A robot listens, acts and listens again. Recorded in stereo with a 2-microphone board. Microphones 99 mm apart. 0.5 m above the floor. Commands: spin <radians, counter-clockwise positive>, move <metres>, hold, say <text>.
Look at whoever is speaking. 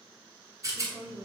spin -0.96
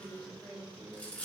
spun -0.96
spin -0.26
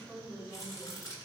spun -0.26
say Facing the woman speaking, 1 to 2 m away.